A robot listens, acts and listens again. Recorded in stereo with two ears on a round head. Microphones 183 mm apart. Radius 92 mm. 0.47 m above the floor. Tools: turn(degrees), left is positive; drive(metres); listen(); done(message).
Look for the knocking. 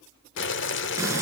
listen()
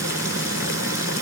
listen()
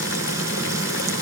done("I can't make out knocking to turn to.")